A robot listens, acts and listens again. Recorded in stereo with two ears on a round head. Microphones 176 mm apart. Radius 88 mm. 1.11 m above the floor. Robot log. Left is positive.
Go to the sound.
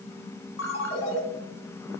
note: The ringtone: about 70° left or 110° left.
cmd yaw +70
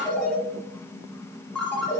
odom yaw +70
cmd fwd 1.0
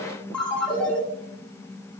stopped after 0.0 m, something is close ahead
end: Blocked. The ringtone is further on, straight ahead.